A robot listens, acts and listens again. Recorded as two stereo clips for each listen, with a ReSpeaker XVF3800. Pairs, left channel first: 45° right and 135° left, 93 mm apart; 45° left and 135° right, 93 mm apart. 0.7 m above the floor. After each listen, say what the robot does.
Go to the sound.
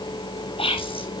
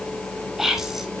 Turn 45° right.
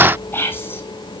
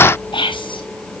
Turn 20° left.
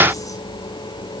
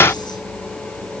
Keep listening.
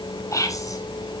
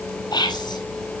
Turn 10° left.
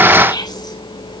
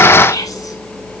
Drive 1.0 m forward.
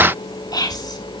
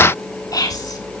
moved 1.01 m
Drive 1.0 m forward.
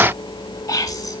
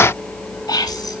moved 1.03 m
Drive 1.0 m forward.
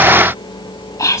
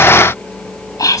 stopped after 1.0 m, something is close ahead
Turn 10° left.
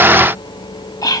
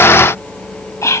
I am next to the whispering.